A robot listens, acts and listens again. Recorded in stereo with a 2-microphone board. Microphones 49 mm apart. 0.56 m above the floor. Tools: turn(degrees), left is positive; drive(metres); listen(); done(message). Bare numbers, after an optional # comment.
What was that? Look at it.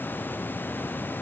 listen()
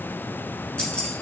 # The keys jangling: about 25° left or 155° left.
turn(25)
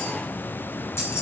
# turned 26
# So it is at 120° left.
turn(120)
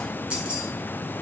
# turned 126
# The keys jangling is now 25° right.
turn(-25)
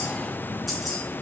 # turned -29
done("Found it: keys jangling, straight ahead.")